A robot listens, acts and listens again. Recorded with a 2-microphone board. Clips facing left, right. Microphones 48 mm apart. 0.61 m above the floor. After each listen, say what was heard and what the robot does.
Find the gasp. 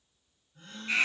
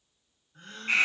The gasp: about 60° right or 120° right. Turn 60° right.
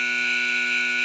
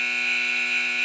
Keep listening.
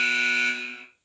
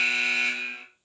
I heard a gasp, but can't make it out now. It was about straight ahead or 60° right.